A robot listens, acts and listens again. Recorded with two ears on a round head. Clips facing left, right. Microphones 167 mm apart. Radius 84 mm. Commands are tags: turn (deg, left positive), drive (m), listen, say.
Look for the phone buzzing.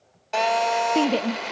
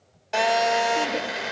<turn deg="-30"/>
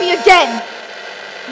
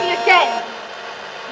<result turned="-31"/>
<turn deg="25"/>
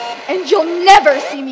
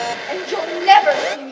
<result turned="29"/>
<say>Facing the phone buzzing.</say>